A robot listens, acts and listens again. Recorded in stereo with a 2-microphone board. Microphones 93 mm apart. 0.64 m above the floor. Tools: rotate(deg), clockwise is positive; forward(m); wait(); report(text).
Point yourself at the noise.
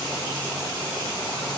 wait()
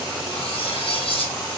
rotate(-90)
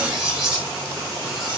report("Found it: cutlery clinking, straight ahead.")